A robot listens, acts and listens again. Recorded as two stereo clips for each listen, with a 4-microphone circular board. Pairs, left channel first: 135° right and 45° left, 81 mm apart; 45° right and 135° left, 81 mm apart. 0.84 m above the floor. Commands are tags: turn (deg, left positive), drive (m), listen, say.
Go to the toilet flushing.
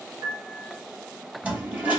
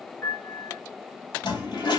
<turn deg="-25"/>
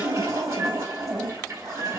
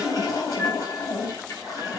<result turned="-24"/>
<drive m="1.0"/>
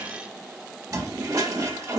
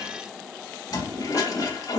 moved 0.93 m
<drive m="1.0"/>
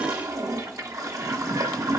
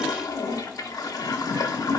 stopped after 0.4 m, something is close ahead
<say>Arrived at the toilet flushing, straight ahead.</say>